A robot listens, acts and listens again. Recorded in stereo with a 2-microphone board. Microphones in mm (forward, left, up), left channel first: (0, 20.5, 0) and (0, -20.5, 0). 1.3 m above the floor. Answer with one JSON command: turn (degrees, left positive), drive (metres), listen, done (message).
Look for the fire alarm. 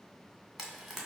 {"listen": true}
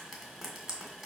{"listen": true}
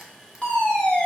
{"turn": 25}
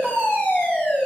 {"turn": 125}
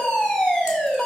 {"turn": 15}
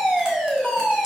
{"done": "Facing the fire alarm."}